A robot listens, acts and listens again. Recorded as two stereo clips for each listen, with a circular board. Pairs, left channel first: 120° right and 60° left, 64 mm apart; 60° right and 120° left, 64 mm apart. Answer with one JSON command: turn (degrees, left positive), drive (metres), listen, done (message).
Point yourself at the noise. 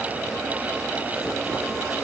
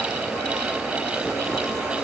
{"listen": true}
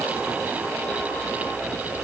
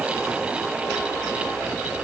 {"listen": true}
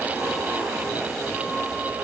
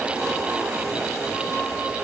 {"done": "I can't make out anything to turn to."}